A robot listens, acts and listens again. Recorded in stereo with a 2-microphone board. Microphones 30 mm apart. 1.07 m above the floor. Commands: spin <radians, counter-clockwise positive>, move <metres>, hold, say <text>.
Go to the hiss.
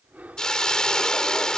spin 0.35
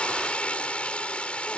spin 2.44
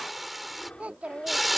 move 1.0
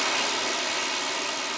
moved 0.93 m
move 1.0
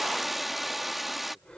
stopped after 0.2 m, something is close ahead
say I am next to the hiss.